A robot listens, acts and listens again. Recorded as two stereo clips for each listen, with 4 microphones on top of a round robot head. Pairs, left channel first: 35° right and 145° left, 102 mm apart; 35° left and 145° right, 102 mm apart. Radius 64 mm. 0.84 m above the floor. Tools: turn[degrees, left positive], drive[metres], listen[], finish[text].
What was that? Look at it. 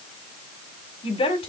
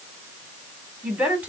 Thought: The woman speaking: 65° right.
Action: turn[-65]
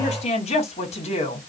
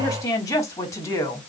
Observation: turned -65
Thought: The woman speaking is now 25° right.
Action: turn[-25]
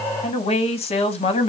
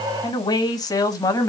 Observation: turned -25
Thought: The woman speaking is now 20° right.
Action: turn[-20]
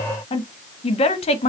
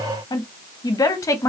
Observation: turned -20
Thought: The woman speaking is now 20° right.
Action: turn[-20]
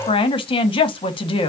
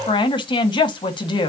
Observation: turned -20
Action: finish[Found it: a woman speaking, straight ahead, 1 to 2 m away.]